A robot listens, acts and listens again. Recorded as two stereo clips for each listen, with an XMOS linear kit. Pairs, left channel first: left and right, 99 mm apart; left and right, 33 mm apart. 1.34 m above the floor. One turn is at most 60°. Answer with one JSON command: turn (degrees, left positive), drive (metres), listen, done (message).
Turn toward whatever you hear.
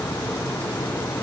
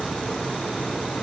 {"listen": true}
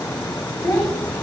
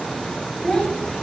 {"turn": 25}
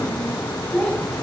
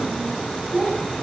{"done": "Found it: a child speaking, straight ahead."}